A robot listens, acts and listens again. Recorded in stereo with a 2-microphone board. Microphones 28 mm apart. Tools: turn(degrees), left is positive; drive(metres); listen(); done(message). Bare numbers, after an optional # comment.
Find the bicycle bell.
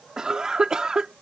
listen()
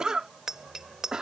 # The bicycle bell: about 20° right or 160° right.
turn(-20)
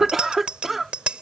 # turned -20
# So it is at 140° right.
turn(-140)
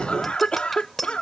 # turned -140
done("Found it: a bicycle bell, straight ahead.")